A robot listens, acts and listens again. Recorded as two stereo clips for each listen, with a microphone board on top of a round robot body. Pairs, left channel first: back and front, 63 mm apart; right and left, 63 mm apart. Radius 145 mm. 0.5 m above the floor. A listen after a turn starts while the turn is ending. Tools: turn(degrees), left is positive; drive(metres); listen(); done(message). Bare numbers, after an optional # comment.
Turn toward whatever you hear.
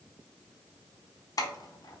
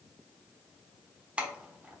# The keys jangling: 160° left.
turn(160)
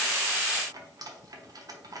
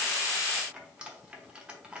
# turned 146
# The keys jangling is now 15° left.
turn(15)
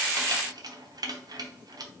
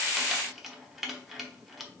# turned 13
done("Found it: keys jangling, straight ahead.")